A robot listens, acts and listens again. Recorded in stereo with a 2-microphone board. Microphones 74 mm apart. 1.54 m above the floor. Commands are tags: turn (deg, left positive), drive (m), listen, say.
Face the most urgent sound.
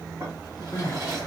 <turn deg="40"/>
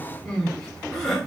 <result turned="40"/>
<say>Found it: crying, straight ahead.</say>